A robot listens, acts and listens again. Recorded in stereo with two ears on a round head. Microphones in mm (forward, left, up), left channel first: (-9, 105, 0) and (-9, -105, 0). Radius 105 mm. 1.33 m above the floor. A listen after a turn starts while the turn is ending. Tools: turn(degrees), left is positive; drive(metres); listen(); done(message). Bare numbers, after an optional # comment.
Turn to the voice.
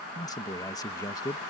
# The man speaking: about 15° left or 165° left.
turn(15)
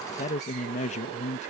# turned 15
# So it is at 150° left.
turn(150)
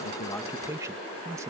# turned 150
# The man speaking is now 15° right.
turn(-15)
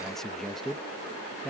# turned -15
done("Facing the man speaking.")